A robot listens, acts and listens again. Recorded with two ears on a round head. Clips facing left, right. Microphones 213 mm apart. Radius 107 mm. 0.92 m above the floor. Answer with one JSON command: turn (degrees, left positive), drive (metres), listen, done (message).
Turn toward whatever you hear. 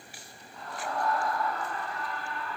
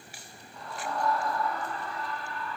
{"turn": -90}
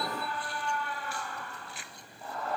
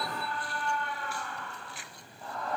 {"done": "Found it: a scream, straight ahead, over 4 m away."}